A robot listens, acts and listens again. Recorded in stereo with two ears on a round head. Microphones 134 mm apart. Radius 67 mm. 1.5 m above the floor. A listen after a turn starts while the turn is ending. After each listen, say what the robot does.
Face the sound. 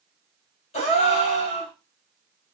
Turn 45° left.
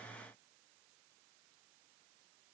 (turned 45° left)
Keep listening.
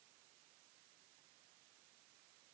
I heard a gasp, but can't make it out now. It was about straight ahead or 90° left.